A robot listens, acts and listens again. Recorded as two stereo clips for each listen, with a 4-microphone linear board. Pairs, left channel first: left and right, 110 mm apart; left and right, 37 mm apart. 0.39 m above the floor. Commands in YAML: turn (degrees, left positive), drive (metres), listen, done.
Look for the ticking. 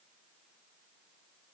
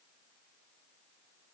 listen: true
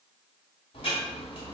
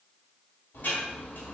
turn: 60
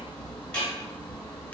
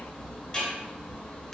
turn: 15
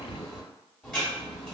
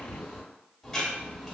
done: "Found it: ticking, straight ahead, 1 to 2 m away."